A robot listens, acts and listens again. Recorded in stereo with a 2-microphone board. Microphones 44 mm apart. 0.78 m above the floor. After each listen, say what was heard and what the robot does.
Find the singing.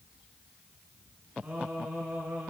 The singing: about 35° right or 145° right. Turn 35° right.
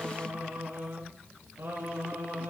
So it is at 100° right. Turn 100° right.
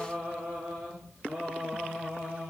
The singing is now 40° right. Turn 40° right.
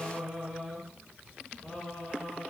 Facing the singing.